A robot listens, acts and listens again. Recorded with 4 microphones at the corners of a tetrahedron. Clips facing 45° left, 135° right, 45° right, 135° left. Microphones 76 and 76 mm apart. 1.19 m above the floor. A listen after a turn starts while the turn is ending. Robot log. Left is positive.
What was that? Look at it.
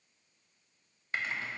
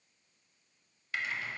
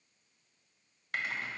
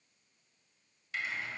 note: The typing on a keyboard: 10° right.
cmd yaw -10
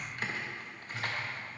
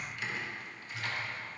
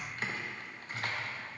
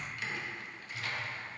end: Found it: typing on a keyboard, straight ahead.